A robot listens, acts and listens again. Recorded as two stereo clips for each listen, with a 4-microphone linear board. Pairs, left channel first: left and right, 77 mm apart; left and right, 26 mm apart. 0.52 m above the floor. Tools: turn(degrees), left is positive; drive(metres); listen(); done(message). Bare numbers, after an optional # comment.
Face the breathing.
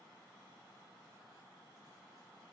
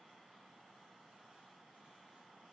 listen()
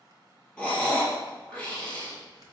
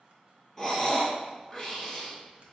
turn(30)
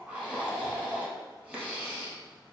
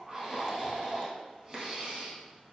# So it is at 20° right.
turn(-20)
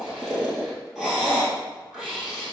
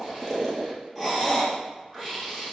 done("Facing the breathing, 1 to 2 m away.")